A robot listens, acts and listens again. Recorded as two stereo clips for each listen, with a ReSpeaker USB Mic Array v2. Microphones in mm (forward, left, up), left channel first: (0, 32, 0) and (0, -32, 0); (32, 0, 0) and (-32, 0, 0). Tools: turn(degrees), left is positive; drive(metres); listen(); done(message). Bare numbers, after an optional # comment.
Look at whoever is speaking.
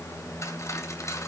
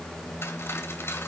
listen()
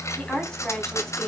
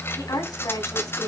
# The woman speaking: 10° left.
turn(10)
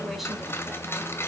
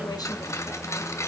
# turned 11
listen()
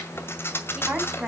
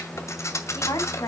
# The woman speaking is now 10° right.
turn(-10)
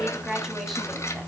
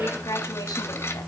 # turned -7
done("Found it: a woman speaking, straight ahead, over 4 m away.")